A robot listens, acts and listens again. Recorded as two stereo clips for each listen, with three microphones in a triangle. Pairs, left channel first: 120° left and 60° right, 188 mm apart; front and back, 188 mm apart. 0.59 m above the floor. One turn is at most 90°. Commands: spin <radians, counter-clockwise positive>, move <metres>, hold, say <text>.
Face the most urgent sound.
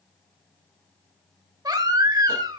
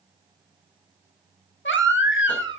spin 0.17
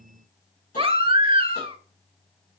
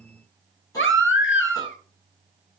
say Facing the baby crying.